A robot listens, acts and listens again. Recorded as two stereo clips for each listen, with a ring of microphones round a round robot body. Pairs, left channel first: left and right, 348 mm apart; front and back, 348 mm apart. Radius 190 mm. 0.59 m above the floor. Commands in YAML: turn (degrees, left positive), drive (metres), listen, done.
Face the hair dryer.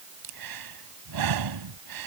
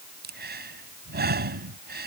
listen: true
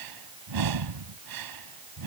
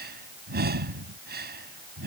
listen: true
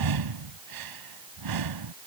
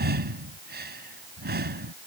done: "I can't make out a hair dryer to turn to."